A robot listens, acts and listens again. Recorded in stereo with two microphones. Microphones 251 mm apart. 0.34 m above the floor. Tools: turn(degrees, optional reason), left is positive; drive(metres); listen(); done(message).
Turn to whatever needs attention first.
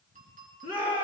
turn(degrees=35, reason="The shout: about 35° left or 145° left.")
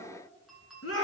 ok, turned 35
turn(degrees=110, reason="So it is at 110° left.")
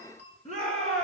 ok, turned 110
turn(degrees=30, reason="The shout is now 30° left.")
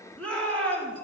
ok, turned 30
done("Found it: a shout, straight ahead.")